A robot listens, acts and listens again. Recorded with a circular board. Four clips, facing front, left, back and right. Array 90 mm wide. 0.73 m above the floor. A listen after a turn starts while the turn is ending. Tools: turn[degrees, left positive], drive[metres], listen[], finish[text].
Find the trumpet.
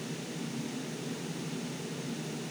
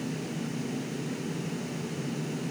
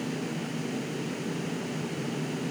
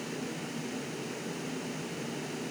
Action: listen[]
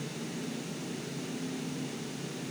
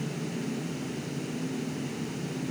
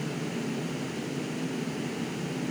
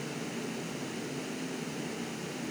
Action: listen[]
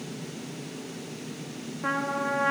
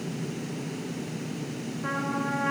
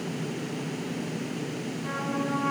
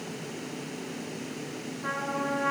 Action: finish[Facing the trumpet, 1 to 2 m away.]